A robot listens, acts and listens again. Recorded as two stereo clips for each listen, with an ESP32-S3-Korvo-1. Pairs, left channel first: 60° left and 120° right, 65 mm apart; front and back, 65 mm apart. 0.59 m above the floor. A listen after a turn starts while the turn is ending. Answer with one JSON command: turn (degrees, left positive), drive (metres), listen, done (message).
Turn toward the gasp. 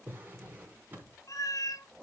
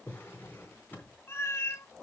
{"listen": true}
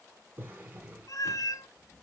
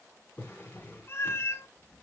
{"listen": true}
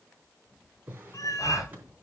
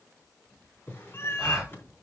{"turn": 100}
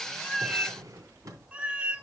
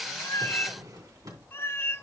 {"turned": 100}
{"done": "I heard a gasp from this way, but can't make it out now."}